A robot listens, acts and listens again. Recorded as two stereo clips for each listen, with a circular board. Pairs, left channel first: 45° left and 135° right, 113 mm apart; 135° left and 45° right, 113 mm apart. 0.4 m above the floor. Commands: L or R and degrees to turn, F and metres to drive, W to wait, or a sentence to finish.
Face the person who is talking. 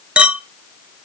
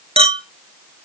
W
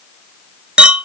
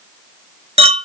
W
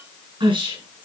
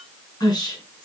R175
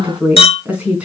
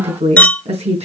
R60
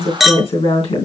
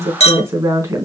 L15
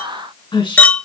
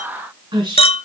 Facing the woman speaking, 2 to 4 m away.